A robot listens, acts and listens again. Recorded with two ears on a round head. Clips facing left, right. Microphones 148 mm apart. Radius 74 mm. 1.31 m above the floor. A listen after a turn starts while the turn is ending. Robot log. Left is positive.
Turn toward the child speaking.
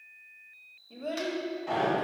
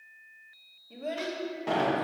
cmd yaw -30
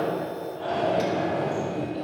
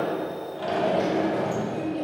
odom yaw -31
note: The child speaking: about 25° right or 155° right.
cmd yaw -25
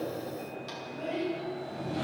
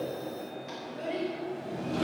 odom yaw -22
cmd yaw -30
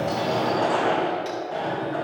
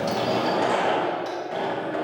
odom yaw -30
cmd idle
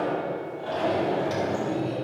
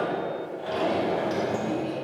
cmd idle
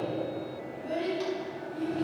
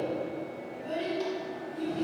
end: Found it: a child speaking, straight ahead.